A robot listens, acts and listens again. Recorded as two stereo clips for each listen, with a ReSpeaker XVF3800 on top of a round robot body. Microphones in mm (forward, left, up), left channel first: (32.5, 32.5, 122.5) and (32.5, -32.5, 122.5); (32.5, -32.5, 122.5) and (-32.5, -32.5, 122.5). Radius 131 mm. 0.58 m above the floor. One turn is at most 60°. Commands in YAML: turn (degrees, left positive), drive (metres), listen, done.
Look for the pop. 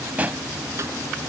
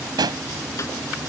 turn: -60
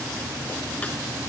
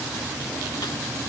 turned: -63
turn: -60
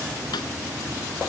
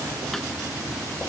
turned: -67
turn: -30
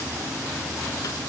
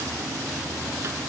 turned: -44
turn: 15
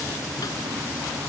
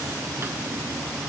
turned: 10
done: "Facing where the pop came from. I can't hear it now."